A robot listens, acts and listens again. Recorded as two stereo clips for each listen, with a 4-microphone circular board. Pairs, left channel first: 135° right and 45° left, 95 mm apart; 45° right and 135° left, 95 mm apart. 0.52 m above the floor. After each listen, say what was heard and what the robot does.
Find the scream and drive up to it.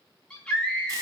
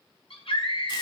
The scream: 55° right. Turn 55° right.
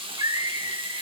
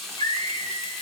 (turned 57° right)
Drive 1.0 m forward.
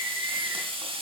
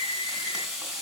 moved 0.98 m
Drive 1.0 m forward.
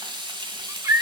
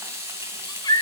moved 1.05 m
The scream is now 10° right. Turn 10° right.
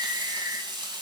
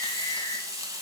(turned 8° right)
Keep listening.
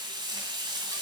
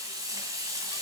Keep listening.
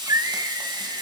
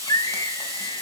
Drive 1.0 m forward.
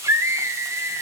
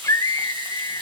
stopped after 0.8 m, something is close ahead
I am next to the scream.